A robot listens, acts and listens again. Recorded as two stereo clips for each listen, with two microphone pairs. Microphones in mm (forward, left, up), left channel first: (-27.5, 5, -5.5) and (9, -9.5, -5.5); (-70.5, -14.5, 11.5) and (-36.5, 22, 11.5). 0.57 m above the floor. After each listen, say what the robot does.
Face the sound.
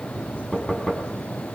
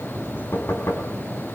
Turn 115° right.
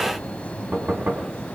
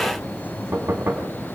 Turn 10° left.
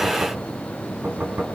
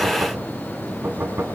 Found it: knocking, straight ahead.